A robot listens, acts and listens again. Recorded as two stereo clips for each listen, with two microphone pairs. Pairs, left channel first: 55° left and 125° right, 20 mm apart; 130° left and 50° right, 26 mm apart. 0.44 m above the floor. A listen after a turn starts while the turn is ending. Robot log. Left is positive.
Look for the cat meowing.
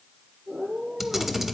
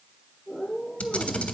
note: The cat meowing: 130° right.
cmd yaw -130
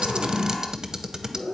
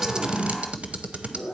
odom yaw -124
note: The cat meowing is now 30° right.
cmd yaw -30
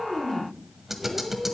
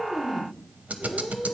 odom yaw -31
note: The cat meowing is now 20° right.
cmd yaw -20
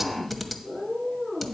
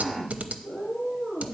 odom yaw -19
note: The cat meowing is now 20° right.
cmd yaw -20
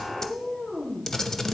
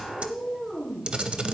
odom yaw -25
end: Facing the cat meowing.